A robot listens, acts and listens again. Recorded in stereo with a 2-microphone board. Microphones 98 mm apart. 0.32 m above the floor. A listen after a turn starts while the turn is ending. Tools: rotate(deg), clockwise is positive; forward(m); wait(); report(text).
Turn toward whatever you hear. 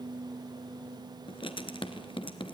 rotate(-60)
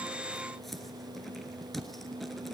report("Facing the writing, 1 to 2 m away.")